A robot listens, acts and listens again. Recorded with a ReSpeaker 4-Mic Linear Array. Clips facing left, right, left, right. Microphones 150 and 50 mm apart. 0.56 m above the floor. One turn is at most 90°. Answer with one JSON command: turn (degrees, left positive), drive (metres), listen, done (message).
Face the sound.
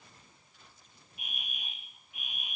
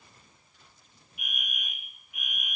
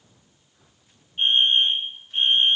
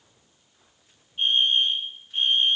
{"turn": 30}
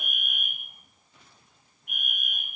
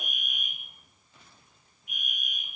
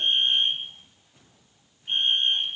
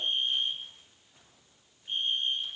{"turn": 90}
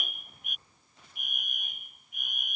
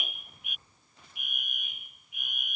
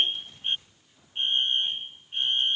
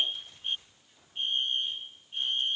{"turn": 50}
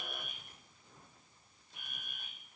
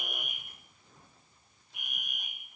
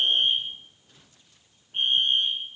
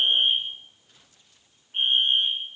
{"turn": -15}
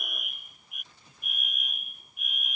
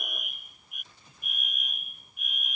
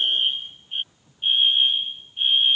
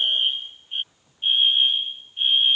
{"done": "Found it: a fire alarm, straight ahead."}